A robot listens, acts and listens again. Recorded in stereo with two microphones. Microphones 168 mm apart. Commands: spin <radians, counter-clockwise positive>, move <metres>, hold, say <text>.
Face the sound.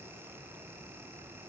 hold
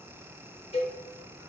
spin 0.61
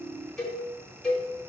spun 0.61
say Facing the cowbell, 1 to 2 m away.